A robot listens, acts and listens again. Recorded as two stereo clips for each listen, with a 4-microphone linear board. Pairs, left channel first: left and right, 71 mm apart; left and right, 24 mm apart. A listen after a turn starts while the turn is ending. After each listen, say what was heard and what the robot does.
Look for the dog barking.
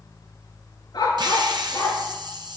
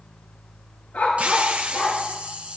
The dog barking: about 70° left or 110° left. Turn 70° left.
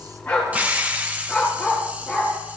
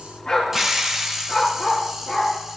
Found it: a dog barking, straight ahead.